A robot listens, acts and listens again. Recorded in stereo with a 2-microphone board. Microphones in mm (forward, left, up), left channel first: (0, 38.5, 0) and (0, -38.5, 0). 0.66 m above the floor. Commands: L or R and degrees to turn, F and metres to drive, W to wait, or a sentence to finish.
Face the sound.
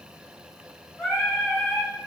L30
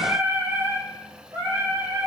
R55
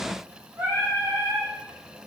R25
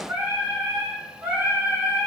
R20
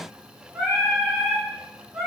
Found it: singing, straight ahead.